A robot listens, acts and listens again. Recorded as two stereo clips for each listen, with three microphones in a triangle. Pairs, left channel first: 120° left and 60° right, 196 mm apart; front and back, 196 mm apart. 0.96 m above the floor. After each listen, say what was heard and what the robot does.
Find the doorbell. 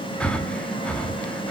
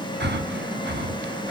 Keep listening.
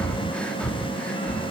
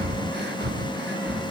Keep listening.
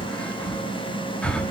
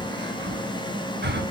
I can't make out a doorbell, only breathing.